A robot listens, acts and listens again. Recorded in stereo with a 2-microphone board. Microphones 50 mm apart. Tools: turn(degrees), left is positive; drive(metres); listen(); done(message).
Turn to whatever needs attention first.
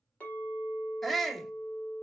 turn(degrees=30)
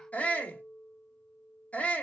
turn(degrees=145)
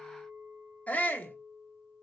turn(degrees=40)
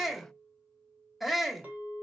done("Facing the shout.")